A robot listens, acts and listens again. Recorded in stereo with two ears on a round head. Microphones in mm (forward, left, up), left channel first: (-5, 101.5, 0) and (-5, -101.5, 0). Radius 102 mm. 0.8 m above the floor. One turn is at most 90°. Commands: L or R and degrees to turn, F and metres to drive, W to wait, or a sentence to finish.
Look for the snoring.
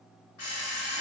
W
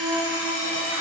W
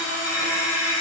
I can't make out snoring to turn to.